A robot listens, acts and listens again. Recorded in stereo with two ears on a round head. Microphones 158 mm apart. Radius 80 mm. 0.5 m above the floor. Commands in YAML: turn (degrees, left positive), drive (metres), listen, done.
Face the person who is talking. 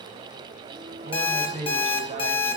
turn: -40
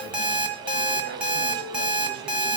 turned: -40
listen: true
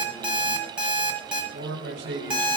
turn: -100
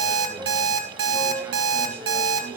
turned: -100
listen: true
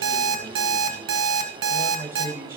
turn: -15
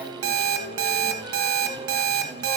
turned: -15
listen: true
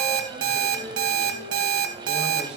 listen: true
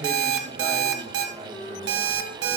done: "Facing where the man speaking came from. I can't hear it now."